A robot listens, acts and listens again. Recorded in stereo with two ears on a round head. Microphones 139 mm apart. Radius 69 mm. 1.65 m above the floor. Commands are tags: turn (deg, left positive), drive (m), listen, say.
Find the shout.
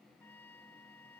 <listen/>
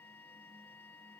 <listen/>
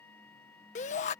<turn deg="50"/>
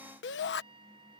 <turn deg="80"/>
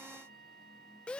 <say>Facing the shout.</say>